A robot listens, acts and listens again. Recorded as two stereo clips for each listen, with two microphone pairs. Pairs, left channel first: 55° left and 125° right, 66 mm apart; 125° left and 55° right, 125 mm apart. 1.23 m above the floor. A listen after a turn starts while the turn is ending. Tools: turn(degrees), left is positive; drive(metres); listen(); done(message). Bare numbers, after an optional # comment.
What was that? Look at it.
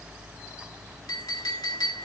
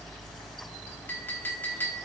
# The clink: 50° left.
turn(50)
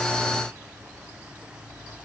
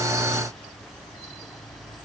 listen()
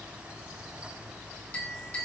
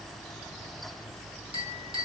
# The clink is now 10° right.
turn(-10)
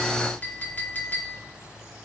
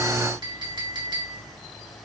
done("Found it: a clink, straight ahead, 2 to 4 m away.")